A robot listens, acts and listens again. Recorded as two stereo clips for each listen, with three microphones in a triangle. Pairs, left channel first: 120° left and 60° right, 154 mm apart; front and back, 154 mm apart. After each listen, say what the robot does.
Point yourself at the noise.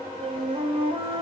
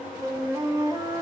Turn 115° right.
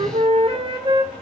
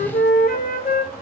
Facing the flute, under 1 m away.